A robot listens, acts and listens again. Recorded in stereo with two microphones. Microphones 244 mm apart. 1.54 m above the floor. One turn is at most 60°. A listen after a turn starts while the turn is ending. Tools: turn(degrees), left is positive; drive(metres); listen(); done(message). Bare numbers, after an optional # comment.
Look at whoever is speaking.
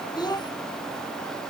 # The child speaking: about 15° left or 165° left.
turn(15)
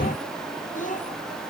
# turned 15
# So it is at 150° left.
turn(60)
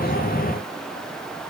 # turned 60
# Nothing new. It was at 90° left.
turn(60)
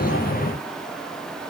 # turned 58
# Nothing new. It was at 30° left.
turn(30)
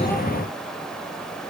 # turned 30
done("Facing where the child speaking came from. I can't hear it now.")